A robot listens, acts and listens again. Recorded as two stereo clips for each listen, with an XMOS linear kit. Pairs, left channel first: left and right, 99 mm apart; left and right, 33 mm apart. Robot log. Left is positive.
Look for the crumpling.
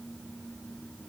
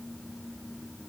cmd idle
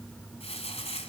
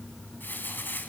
cmd yaw +90
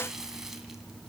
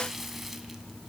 end: Found it: crumpling, straight ahead, 2 to 4 m away.